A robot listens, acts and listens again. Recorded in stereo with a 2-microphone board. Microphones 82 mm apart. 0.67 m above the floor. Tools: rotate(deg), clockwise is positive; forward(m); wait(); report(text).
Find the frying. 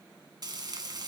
rotate(55)
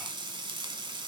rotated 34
rotate(85)
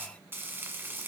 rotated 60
rotate(25)
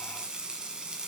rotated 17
rotate(10)
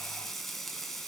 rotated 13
report("Found it: frying, straight ahead.")